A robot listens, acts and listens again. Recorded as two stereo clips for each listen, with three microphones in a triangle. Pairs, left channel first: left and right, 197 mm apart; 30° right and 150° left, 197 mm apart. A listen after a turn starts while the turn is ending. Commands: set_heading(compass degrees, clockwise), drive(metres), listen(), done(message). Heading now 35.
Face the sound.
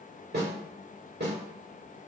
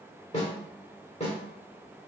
set_heading(115)
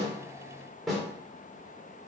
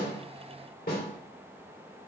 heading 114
done("Facing the snare drum.")